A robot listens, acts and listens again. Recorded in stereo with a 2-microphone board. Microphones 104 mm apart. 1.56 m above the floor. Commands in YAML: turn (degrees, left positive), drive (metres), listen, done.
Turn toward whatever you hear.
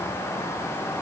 listen: true
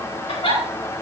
turn: 70
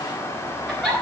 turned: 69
done: "Facing the giggle."